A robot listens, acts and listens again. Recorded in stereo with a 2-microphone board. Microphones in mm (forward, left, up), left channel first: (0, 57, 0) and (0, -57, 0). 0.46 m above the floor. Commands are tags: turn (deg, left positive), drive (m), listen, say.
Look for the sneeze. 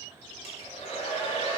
<listen/>
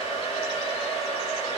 <listen/>
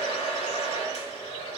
<say>I can't make out a sneeze to turn to.</say>